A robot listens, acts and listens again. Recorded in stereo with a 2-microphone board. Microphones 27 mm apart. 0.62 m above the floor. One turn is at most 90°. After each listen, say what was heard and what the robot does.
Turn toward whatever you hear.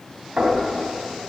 The knocking: about 45° right or 135° right. Turn 45° right.
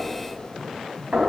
So it is at 85° right. Turn 85° right.
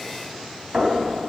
The knocking is now 40° right. Turn 40° right.
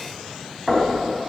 Found it: knocking, straight ahead, 2 to 4 m away.